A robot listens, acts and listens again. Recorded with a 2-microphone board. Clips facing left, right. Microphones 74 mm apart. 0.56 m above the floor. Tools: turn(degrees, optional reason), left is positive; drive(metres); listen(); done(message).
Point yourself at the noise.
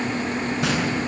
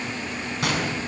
turn(degrees=-65, reason="The gunshot: about 65° right or 115° right.")
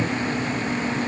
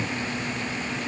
listen()
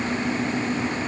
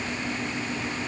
done("I heard a gunshot, but can't make it out now. It was about straight ahead or 50° right.")